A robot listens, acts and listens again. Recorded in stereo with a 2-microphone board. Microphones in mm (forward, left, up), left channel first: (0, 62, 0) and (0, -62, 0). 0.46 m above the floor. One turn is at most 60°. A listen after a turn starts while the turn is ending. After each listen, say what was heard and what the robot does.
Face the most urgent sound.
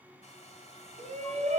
The shout: about 70° right or 110° right. Turn 60° right.
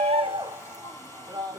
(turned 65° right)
So it is at 30° right. Turn 30° right.
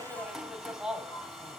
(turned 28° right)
Found it: a shout, straight ahead, 2 to 4 m away.